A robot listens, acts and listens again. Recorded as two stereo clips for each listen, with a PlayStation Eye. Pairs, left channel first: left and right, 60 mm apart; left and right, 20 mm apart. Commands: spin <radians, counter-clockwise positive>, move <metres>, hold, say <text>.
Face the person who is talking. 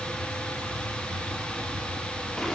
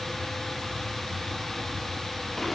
hold
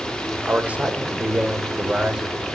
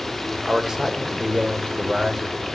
spin -0.52
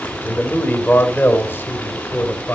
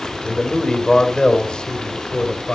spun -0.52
spin 0.61
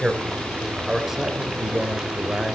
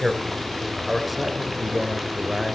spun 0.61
spin -0.17
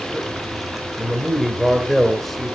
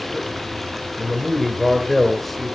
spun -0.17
say Facing the man speaking, 2 to 4 m away.